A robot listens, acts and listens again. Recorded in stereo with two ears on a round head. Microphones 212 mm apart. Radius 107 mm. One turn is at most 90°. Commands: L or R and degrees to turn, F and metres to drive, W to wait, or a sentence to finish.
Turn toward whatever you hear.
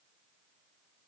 W
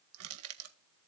R70
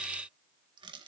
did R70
R20
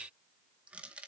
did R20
Facing the crushing, 1 to 2 m away.